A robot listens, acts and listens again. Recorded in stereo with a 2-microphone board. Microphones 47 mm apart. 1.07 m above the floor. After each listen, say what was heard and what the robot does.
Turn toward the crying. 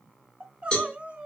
The crying: about 30° right or 150° right. Turn 30° right.
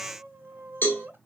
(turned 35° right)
So it is at 110° right. Turn 110° right.
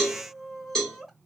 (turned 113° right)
Found it: crying, straight ahead, 1 to 2 m away.